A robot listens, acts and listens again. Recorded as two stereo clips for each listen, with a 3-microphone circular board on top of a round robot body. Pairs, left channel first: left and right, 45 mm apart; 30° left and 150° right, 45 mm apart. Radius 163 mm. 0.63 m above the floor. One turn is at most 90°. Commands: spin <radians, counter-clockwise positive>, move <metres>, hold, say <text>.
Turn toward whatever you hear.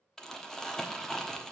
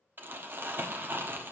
spin 1.57
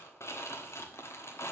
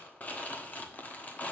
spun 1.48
spin 1.48
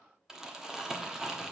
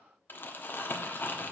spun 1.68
spin -0.17
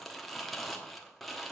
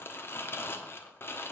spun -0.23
say Facing the crumpling, 1 to 2 m away.